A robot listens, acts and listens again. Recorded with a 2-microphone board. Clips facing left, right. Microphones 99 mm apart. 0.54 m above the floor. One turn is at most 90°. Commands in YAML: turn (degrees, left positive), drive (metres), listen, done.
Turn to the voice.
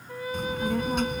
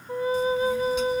turn: 65
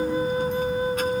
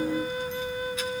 turn: 50
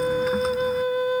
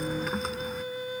listen: true
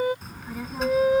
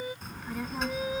done: "Facing the child speaking."